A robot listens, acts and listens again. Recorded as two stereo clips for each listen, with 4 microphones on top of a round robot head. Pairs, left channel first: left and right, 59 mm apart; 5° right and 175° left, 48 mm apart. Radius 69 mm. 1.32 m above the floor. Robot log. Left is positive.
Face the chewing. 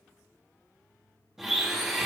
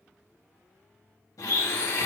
cmd idle
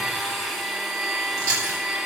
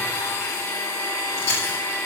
note: The chewing: 50° right.
cmd yaw -50
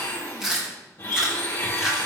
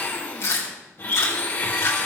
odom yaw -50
end: Found it: chewing, straight ahead, 2 to 4 m away.